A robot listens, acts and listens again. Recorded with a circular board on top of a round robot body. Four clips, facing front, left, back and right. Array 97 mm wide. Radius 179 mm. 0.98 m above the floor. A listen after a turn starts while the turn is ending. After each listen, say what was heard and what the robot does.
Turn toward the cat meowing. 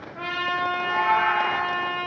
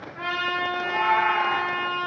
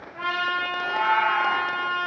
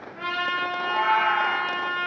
The cat meowing: 70° right. Turn 70° right.
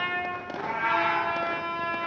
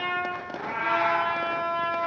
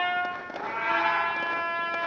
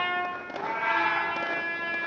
The cat meowing is now 10° left. Turn 10° left.
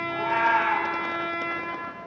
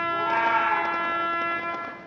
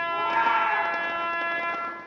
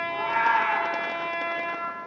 Found it: a cat meowing, straight ahead.